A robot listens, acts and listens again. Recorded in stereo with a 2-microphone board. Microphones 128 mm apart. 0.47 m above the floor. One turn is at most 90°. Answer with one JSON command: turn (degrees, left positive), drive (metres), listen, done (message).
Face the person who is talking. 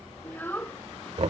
{"turn": 30}
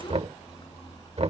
{"listen": true}
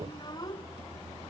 {"turn": 90}
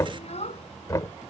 {"turn": 60}
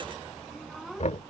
{"done": "Facing the child speaking."}